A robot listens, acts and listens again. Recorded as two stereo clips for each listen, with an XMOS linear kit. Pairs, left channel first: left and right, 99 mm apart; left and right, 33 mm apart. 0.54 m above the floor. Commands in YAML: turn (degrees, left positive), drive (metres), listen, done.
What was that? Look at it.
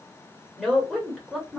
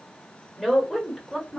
turn: -30
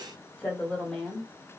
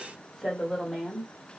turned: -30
turn: 30
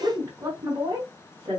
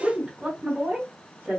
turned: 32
turn: -50
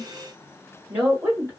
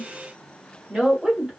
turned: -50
turn: -20
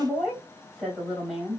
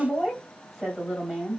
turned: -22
done: "Found it: a woman speaking, straight ahead."